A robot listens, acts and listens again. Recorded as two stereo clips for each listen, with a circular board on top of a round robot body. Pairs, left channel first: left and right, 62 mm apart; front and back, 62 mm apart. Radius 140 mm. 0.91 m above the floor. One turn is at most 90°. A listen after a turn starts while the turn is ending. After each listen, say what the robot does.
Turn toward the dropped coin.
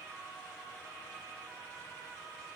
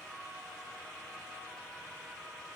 Keep listening.
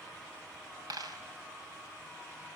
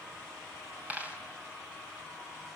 Turn 90° right.
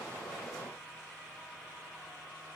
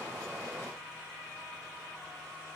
Turn 20° right.
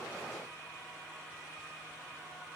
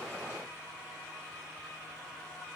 I heard a dropped coin from this way, but can't make it out now.